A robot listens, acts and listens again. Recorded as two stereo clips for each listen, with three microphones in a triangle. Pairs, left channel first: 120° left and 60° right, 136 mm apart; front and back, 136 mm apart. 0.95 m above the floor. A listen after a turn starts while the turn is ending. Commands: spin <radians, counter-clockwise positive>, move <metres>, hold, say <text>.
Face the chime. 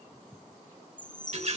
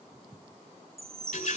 spin 2.44
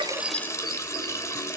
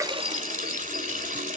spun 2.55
spin -0.17
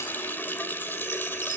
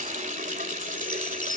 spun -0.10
hold
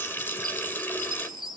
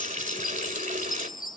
say Found it: a chime, straight ahead, 1 to 2 m away.